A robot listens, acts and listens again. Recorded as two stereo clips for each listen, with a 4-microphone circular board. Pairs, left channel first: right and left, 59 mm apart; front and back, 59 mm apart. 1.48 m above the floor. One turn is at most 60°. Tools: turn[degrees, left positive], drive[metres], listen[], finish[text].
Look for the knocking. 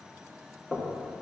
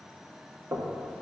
Thought: The knocking: 165° right.
Action: turn[-60]
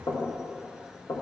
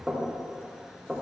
Thought: The knocking is now 95° right.
Action: turn[-60]
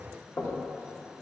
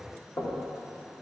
Thought: The knocking is now 35° right.
Action: turn[-35]
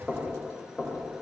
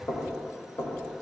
Action: finish[Found it: knocking, straight ahead, 1 to 2 m away.]